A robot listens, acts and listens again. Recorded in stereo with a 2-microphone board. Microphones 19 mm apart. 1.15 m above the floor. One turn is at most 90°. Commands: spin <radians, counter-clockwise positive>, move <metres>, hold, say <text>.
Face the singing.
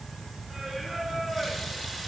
spin -0.44
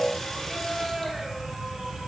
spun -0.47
spin -1.57
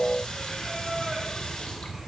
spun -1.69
spin -0.52
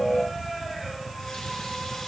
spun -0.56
say Facing the singing.